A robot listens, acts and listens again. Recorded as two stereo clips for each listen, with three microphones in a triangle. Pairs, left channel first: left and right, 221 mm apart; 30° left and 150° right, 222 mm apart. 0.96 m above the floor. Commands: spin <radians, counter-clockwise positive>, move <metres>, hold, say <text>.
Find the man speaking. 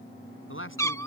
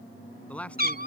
spin 2.01
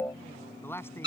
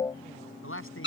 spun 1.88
spin 0.17
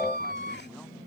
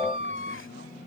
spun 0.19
hold
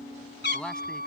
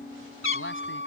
say Facing the man speaking.